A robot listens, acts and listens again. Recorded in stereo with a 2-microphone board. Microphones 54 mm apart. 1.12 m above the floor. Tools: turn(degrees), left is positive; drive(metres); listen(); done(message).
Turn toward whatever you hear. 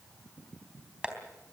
turn(degrees=-15)
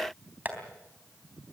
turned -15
turn(degrees=-150)
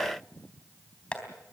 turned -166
turn(degrees=20)
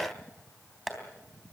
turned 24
done("Found it: tapping, straight ahead.")